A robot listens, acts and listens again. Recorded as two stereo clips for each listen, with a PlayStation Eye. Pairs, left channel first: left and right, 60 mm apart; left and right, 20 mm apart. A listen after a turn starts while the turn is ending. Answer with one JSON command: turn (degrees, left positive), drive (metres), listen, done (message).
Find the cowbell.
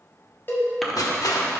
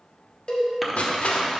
{"turn": 35}
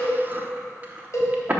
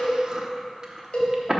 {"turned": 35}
{"turn": 100}
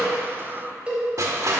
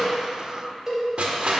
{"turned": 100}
{"turn": -20}
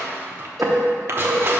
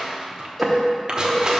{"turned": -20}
{"listen": true}
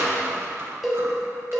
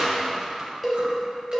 {"done": "Facing the cowbell, 1 to 2 m away."}